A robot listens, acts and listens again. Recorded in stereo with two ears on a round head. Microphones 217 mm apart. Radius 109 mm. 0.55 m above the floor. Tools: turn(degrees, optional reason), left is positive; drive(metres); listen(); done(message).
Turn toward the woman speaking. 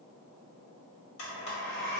listen()
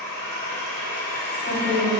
turn(degrees=25, reason="The woman speaking: about 25° left or 155° left.")
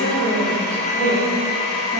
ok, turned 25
turn(degrees=125, reason="So it is at 125° left.")
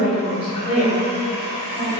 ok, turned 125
turn(degrees=40, reason="The woman speaking is now 40° left.")
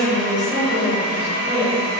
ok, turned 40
turn(degrees=15, reason="The woman speaking is now 15° left.")
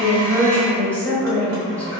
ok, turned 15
done("Facing the woman speaking.")